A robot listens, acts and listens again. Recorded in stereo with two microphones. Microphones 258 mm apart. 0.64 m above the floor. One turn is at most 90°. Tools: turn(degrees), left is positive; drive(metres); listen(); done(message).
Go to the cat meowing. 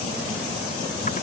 listen()
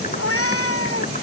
turn(degrees=70)
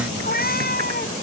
turn(degrees=40)
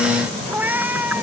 drive(metres=1.0)
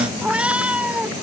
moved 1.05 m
drive(metres=1.0)
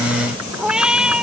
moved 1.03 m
drive(metres=1.0)
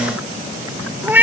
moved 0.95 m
turn(degrees=-10)
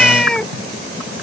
drive(metres=1.0)
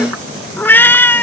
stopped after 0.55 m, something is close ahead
turn(degrees=10)
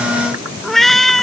done("Arrived at the cat meowing, straight ahead.")